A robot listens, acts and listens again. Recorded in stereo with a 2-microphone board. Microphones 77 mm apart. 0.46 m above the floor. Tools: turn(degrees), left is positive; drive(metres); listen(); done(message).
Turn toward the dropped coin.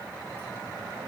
listen()
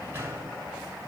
listen()
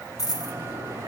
turn(degrees=50)
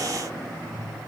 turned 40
listen()
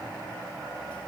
done("I heard a dropped coin, but can't make it out now. It was about 10° left or 90° left.")